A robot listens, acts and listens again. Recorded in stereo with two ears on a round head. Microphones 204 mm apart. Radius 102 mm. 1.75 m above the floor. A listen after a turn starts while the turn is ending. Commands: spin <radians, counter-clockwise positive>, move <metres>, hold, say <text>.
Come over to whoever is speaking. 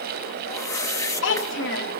spin 1.05
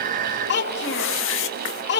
spin 0.96
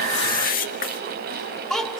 move 1.0
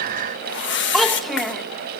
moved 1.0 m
move 1.0
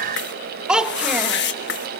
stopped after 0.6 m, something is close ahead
say Arrived at the child speaking, straight ahead.